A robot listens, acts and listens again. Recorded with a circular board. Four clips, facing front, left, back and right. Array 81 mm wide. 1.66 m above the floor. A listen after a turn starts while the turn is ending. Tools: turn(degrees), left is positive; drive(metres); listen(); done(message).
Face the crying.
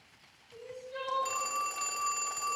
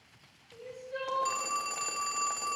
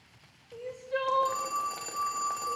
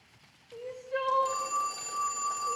turn(degrees=-175)
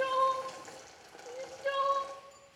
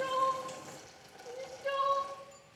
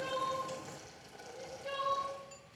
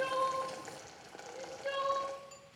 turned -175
turn(degrees=-10)
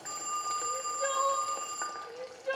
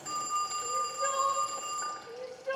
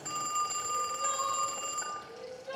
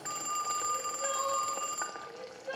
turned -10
done("Facing the crying, 2 to 4 m away.")